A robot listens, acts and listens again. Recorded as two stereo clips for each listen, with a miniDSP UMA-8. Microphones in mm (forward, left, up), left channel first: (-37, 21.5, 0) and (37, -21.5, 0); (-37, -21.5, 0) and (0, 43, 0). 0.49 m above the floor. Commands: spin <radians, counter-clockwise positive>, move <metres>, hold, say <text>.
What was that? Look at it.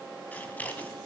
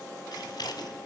spin -2.44
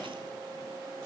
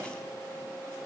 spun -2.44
hold
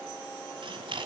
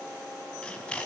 spin -0.79
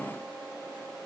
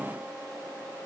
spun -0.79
hold
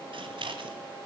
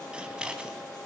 spin -0.26
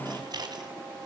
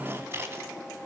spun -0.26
say Found it: scissors, straight ahead.